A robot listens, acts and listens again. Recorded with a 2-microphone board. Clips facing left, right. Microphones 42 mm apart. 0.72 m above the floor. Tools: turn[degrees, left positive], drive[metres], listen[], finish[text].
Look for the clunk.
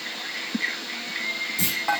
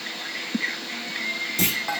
Thought: The clunk: about 70° right or 110° right.
Action: turn[-70]
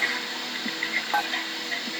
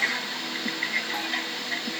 Action: listen[]
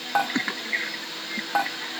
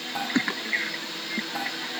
Action: finish[I heard a clunk, but can't make it out now. It was about straight ahead or 40° right.]